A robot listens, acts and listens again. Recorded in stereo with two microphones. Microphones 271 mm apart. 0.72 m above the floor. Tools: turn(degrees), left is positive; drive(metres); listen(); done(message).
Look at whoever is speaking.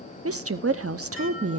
turn(degrees=-60)
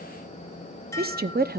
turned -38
turn(degrees=-45)
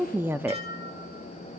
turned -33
turn(degrees=-10)
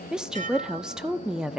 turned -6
done("Facing the woman speaking, under 1 m away.")